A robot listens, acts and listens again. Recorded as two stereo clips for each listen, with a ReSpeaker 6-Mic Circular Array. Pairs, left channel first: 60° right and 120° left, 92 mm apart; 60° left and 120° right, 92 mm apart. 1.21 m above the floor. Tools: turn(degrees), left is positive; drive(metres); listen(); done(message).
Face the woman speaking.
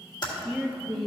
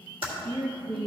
turn(degrees=-150)
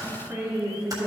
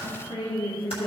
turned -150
turn(degrees=55)
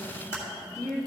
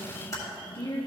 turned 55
done("Facing the woman speaking.")